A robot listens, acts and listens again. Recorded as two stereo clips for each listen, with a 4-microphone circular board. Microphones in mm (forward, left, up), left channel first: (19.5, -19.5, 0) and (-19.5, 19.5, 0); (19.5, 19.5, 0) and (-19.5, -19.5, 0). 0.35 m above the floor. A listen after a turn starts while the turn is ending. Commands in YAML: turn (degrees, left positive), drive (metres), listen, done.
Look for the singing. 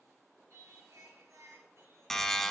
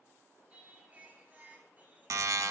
turn: 165
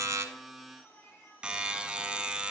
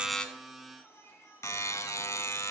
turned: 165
done: "Facing the singing, 2 to 4 m away."